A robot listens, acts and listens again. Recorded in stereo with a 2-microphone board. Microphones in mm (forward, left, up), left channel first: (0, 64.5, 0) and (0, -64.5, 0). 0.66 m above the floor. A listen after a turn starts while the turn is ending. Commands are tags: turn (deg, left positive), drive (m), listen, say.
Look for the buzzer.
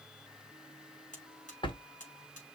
<turn deg="90"/>
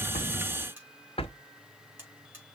<turn deg="-15"/>
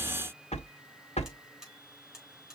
<say>Found it: a buzzer, straight ahead.</say>